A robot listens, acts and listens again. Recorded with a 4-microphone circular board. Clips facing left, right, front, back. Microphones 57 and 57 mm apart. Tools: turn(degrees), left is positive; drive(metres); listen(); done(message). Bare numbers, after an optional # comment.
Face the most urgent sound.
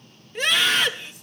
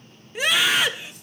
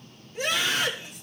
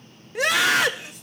# The scream: 170° right.
turn(-170)
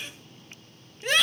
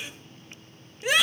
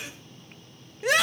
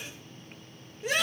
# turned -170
done("Facing the scream.")